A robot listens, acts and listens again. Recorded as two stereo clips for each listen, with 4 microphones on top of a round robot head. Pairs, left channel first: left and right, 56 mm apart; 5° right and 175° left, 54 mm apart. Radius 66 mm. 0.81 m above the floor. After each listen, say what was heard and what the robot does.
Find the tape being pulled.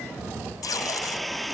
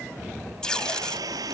The tape being pulled: 75° left. Turn 75° left.
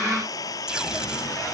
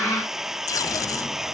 The tape being pulled is now 10° right. Turn 10° right.
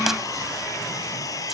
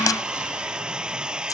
Keep listening.
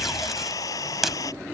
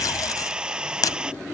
Facing the tape being pulled.